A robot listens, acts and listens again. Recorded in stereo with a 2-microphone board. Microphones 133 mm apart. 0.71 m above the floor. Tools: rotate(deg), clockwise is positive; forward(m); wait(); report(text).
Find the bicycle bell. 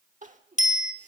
rotate(-90)
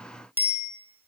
rotate(15)
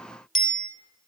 report("Found it: a bicycle bell, straight ahead, 2 to 4 m away.")